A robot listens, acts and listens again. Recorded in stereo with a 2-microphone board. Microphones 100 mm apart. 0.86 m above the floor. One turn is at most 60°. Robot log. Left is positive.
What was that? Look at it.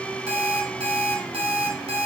cmd yaw -60
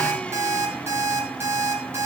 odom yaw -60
note: So it is at 25° right.
cmd yaw -25
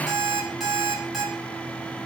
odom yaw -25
end: Found it: an alarm clock, straight ahead.